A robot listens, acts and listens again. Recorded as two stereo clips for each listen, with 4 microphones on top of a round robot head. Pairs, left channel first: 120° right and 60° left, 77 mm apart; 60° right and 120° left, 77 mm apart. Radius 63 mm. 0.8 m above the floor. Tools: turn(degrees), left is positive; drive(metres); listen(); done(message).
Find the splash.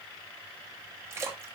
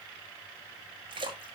turn(degrees=120)
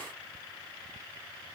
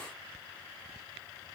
done("Facing where the splash came from. I can't hear it now.")